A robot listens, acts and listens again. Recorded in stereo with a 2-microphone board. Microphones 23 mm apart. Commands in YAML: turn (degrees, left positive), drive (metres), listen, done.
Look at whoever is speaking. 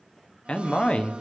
turn: 60
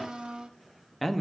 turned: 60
turn: 10
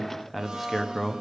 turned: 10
done: "Facing the man speaking."